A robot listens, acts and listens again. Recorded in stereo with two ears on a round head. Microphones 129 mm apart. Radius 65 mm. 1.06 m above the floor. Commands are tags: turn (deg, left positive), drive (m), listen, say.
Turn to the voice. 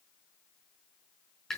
<listen/>
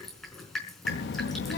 <turn deg="90"/>
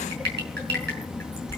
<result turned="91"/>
<say>Facing the child speaking.</say>